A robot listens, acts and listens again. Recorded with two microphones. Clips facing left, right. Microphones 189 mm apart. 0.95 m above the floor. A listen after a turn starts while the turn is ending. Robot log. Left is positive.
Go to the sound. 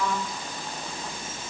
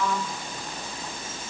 cmd idle
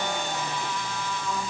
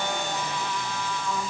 cmd idle
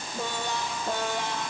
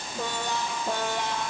end: I can't make out anything to turn to.